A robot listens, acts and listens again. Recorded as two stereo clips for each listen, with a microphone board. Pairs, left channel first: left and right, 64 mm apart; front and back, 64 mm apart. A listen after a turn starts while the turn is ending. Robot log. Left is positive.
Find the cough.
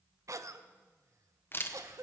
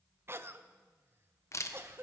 note: The cough: 125° right.
cmd yaw -125
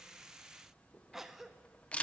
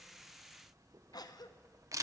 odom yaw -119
end: Facing the cough.